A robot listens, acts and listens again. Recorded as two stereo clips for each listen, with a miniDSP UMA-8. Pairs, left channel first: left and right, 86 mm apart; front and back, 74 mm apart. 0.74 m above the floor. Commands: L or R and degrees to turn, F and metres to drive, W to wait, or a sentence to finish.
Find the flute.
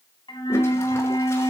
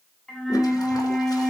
L80
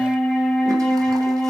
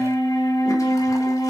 Facing the flute, 1 to 2 m away.